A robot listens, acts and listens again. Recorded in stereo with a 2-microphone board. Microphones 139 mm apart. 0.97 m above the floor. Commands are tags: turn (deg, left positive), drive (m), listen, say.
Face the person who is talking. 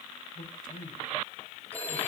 <turn deg="75"/>
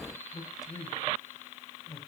<turn deg="25"/>
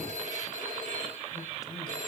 <listen/>
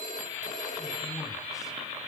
<listen/>
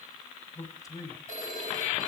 <turn deg="25"/>
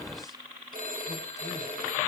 <listen/>
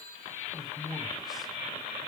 <say>Found it: a man speaking, straight ahead.</say>